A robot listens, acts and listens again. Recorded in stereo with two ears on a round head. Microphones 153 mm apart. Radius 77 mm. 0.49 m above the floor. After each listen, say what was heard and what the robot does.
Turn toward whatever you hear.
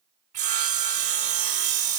The sawing: about 45° right or 135° right. Turn 45° right.
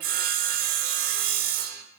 So it is at 80° right. Turn 80° right.
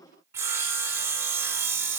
The sawing is now 20° right. Turn 20° right.
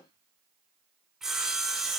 Facing the sawing.